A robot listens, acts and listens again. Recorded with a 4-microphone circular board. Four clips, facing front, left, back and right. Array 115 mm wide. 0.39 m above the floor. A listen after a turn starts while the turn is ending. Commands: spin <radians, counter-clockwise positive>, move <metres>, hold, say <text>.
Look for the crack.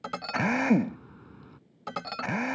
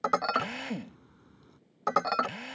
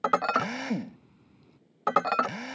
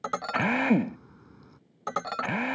spin -0.35
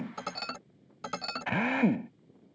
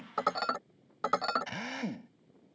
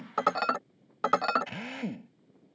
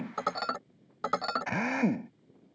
say Facing where the crack came from. I can't hear it now.